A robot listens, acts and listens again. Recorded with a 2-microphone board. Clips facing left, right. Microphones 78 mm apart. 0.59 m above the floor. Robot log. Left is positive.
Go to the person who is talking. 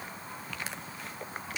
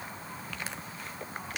cmd idle
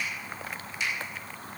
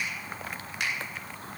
cmd idle
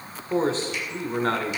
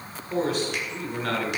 note: The man speaking: about 35° left or 145° left.
cmd yaw +35
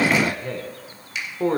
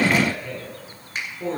note: So it is at 105° left.
cmd yaw +105
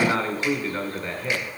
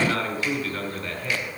note: The man speaking is now 30° left.
cmd yaw +30
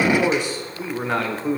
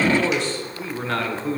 note: The man speaking is now 20° left.
cmd yaw +20
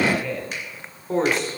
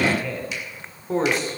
cmd fwd 1.0
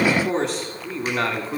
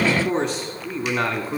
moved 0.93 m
cmd fwd 1.0
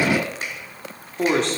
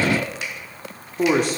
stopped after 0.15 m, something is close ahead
note: The man speaking is now 10° right.
cmd yaw -10
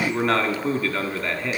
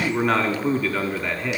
end: I am next to the man speaking.